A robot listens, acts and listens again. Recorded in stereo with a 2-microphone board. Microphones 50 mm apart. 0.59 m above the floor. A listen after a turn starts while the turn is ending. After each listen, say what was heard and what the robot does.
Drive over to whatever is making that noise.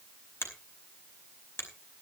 The finger snap: about 50° left or 130° left. Turn 50° left.
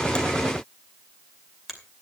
Drive 1.0 m forward.
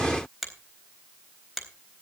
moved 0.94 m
Drive 1.0 m forward.
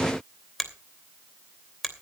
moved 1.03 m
Drive 1.0 m forward.
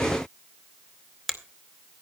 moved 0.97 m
Drive 1.0 m forward.
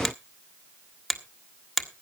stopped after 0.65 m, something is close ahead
Arrived at the finger snap, straight ahead.